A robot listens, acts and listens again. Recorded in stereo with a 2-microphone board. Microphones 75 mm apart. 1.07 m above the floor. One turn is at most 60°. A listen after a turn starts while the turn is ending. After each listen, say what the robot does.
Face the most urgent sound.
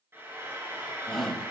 Turn 30° left.
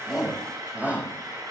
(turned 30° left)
Turn 20° right.
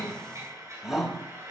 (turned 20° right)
Found it: a shout, straight ahead, over 4 m away.